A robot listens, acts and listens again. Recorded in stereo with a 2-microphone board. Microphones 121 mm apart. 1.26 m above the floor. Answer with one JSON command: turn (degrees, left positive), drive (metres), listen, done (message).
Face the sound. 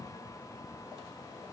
{"listen": true}
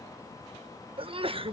{"turn": -50}
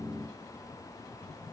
{"listen": true}
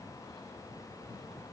{"done": "I heard a sneeze, but can't make it out now. It was about straight ahead or 80° right."}